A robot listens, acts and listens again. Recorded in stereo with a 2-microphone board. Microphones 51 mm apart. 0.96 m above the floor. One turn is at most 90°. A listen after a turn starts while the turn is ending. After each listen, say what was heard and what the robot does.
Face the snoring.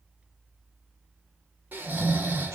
The snoring: about 40° right or 140° right. Turn 40° right.
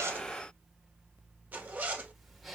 Found it: snoring, straight ahead, 1 to 2 m away.